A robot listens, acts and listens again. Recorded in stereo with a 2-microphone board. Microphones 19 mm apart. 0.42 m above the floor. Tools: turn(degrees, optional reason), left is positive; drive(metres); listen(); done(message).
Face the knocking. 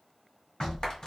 turn(degrees=70, reason="The knocking: about 70° left or 110° left.")
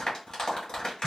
listen()
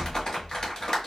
turn(degrees=20, reason="So it is at 20° left.")
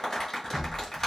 done("Found it: knocking, straight ahead.")